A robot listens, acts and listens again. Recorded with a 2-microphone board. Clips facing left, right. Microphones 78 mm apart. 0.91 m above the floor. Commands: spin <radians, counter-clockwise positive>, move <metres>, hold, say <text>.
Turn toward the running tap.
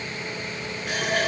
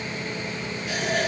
spin 1.05
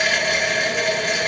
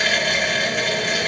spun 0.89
say Found it: a running tap, straight ahead, 1 to 2 m away.